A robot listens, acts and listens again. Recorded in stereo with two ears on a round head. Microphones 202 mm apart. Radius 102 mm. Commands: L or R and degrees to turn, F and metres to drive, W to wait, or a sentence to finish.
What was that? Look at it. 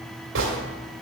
R55
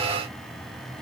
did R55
W
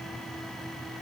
I heard a gunshot, but can't make it out now. It was about straight ahead or 70° right.